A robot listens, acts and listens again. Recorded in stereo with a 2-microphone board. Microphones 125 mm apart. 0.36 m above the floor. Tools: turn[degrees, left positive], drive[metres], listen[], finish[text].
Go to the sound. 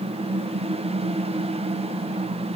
Action: listen[]
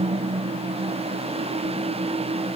Action: listen[]
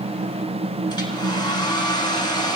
Thought: The hair dryer: about 35° left or 145° left.
Action: turn[35]
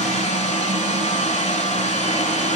Thought: So it is at 110° left.
Action: turn[110]
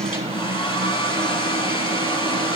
Thought: The hair dryer is now 40° left.
Action: turn[40]
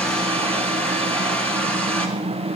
Thought: The hair dryer is now 10° left.
Action: turn[10]
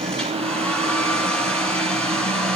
Thought: The hair dryer is now 10° left.
Action: turn[10]
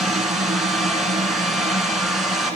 Action: drive[1.0]
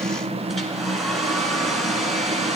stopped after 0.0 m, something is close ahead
Action: finish[Blocked. The hair dryer is further on, straight ahead.]